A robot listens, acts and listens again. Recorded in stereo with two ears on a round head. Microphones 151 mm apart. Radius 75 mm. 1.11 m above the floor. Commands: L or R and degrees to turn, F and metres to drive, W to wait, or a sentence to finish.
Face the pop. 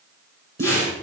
R55
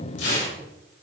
W
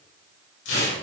I heard a pop, but can't make it out now. It was about straight ahead or 70° right.